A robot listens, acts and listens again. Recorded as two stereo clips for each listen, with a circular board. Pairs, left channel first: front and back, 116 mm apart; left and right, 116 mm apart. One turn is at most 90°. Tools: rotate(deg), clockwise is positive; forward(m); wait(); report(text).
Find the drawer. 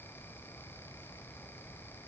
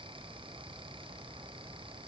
wait()
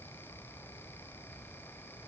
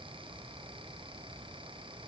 wait()
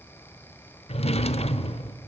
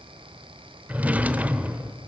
rotate(15)
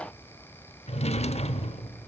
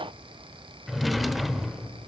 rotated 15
report("Facing the drawer.")